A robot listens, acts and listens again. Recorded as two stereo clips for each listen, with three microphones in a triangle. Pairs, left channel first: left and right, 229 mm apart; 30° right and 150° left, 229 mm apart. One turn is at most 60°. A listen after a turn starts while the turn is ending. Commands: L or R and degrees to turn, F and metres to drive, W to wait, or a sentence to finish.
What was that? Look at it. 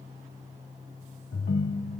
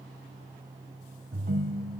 L60
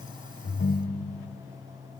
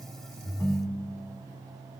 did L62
L50
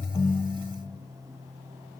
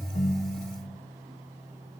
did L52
Facing the ringtone, under 1 m away.